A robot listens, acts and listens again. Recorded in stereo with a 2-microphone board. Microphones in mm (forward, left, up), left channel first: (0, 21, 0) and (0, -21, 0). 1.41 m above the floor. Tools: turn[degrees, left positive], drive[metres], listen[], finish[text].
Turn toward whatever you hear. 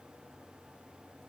Action: listen[]
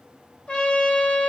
Thought: The trumpet: about 30° left or 150° left.
Action: turn[30]
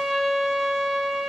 Action: finish[Found it: a trumpet, straight ahead.]